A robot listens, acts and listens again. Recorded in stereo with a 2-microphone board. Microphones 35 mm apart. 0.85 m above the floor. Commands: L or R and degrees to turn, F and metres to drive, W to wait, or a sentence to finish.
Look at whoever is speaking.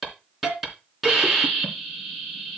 W
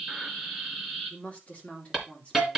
L40
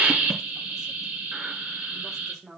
R10
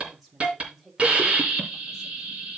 Facing the woman speaking.